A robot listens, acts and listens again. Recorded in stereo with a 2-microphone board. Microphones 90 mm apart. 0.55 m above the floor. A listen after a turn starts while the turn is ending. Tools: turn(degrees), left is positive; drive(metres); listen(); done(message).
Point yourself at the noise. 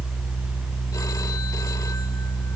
listen()
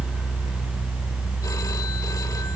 listen()
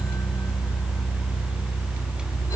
done("I can't make out anything.")